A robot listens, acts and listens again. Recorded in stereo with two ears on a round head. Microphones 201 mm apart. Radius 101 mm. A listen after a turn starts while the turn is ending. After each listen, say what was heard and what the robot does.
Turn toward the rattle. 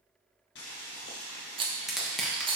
The rattle: about 25° right or 155° right. Turn 25° right.
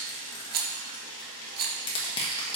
So it is at 130° right. Turn 130° right.
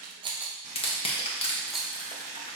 Found it: a rattle, straight ahead.